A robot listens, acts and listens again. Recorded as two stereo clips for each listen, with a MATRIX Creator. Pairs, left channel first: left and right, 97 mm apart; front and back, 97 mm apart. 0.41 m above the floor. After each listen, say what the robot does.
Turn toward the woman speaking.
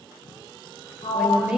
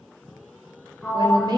Turn 165° right.
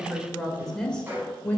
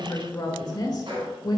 Turn 25° left.
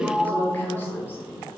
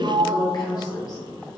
Turn 30° left.
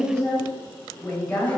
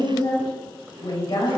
Turn 15° left.
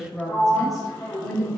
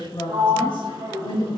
Found it: a woman speaking, straight ahead, 1 to 2 m away.